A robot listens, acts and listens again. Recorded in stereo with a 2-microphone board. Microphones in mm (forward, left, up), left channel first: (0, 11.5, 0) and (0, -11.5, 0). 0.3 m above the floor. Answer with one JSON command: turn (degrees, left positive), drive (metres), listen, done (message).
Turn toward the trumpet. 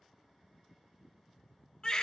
{"listen": true}
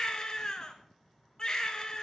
{"listen": true}
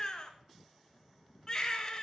{"done": "I can't make out a trumpet to turn to."}